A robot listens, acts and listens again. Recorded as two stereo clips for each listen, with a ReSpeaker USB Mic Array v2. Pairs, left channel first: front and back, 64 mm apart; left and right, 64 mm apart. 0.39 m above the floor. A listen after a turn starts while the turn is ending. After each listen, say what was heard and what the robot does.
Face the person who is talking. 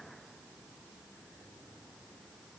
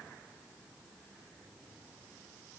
Keep listening.
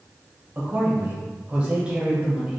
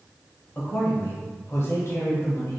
The man speaking: 105° left. Turn 105° left.
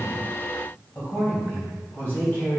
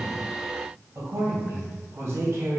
The man speaking is now 50° right. Turn 50° right.
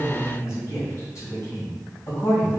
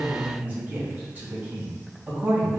The man speaking is now 30° right. Turn 30° right.
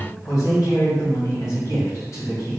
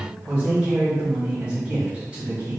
The man speaking is now 20° right. Turn 20° right.
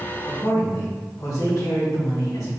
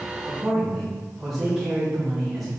Found it: a man speaking, straight ahead.